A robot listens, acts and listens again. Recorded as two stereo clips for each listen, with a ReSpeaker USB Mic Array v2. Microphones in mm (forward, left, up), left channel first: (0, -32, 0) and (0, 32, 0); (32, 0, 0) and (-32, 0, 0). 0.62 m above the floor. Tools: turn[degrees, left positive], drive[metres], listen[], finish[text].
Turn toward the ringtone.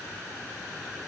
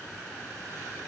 Action: listen[]
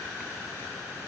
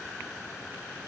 Action: listen[]
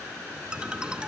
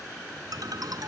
Thought: The ringtone: 165° left.
Action: turn[165]
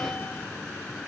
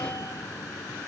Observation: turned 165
Thought: The ringtone is now 25° right.
Action: turn[-25]
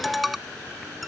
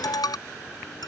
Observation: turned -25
Action: finish[Facing the ringtone.]